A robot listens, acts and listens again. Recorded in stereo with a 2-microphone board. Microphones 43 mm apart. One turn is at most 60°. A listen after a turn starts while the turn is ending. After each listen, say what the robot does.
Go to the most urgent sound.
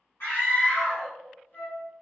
Turn 60° left.
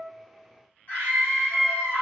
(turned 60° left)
Turn 50° left.
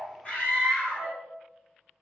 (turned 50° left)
Turn 15° left.
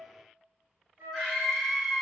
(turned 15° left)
Drive 1.0 m forward.
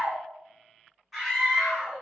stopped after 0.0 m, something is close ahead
Blocked. The scream is further on, straight ahead.